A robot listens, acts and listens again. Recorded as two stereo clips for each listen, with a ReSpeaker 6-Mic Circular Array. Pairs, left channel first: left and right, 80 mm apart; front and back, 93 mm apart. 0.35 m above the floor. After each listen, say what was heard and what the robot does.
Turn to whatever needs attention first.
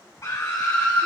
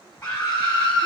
The scream: 65° left. Turn 65° left.
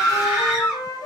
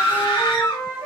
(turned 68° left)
Found it: a scream, straight ahead.